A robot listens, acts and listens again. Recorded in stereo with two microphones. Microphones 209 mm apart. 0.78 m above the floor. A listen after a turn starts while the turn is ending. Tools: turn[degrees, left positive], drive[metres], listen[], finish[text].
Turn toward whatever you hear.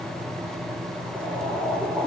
Action: turn[30]
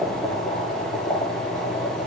Thought: So it is at 140° left.
Action: turn[140]
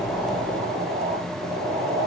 Thought: The boiling is now 30° right.
Action: turn[-30]
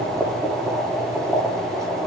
Thought: The boiling is now 15° right.
Action: turn[-15]
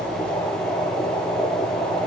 Action: finish[Found it: boiling, straight ahead.]